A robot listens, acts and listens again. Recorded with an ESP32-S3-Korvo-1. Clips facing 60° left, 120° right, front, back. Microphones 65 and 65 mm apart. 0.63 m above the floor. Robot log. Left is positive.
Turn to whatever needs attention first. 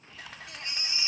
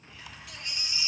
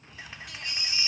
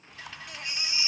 note: The baby crying: 115° left.
cmd yaw +115
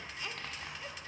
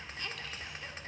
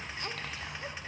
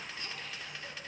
cmd idle
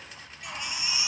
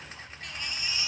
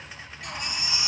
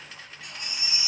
note: The baby crying is now 20° right.
cmd yaw -20
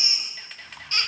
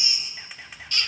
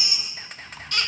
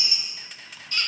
end: Facing the baby crying.